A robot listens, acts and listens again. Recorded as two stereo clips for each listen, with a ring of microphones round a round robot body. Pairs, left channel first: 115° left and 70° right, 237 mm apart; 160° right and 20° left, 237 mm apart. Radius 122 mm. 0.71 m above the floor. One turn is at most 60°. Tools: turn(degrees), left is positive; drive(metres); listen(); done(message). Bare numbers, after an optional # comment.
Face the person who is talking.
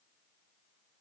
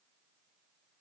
listen()
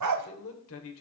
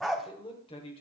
# The man speaking: 135° left.
turn(60)
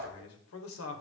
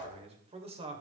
# The man speaking is now 90° left.
turn(60)
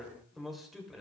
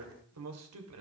# The man speaking is now 20° left.
turn(20)
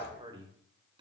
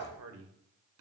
done("Facing the man speaking, 2 to 4 m away.")